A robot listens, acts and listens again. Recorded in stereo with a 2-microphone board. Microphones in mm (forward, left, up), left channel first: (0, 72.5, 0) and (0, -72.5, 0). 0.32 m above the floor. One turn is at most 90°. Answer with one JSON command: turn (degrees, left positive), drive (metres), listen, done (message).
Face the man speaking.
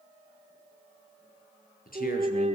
{"turn": 90}
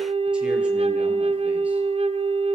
{"listen": true}
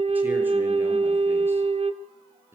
{"listen": true}
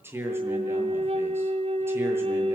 {"turn": -15}
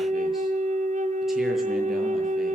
{"listen": true}
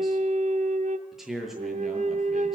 {"done": "Facing the man speaking, over 4 m away."}